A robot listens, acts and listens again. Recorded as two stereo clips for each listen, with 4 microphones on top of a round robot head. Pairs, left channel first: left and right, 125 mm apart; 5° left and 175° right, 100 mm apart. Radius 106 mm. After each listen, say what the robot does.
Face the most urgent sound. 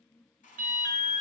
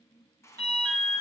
Turn 115° right.
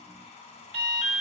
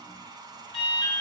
Turn 45° right.
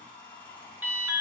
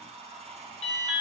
Turn 15° right.
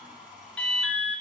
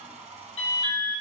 Found it: an alarm, straight ahead.